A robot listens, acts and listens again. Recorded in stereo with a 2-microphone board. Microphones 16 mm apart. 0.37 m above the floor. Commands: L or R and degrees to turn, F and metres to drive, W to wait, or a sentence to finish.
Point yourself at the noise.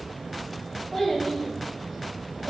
L30
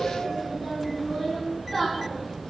L25
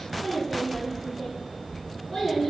L150
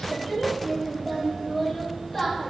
L10
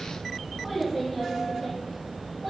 Found it: a child speaking, straight ahead.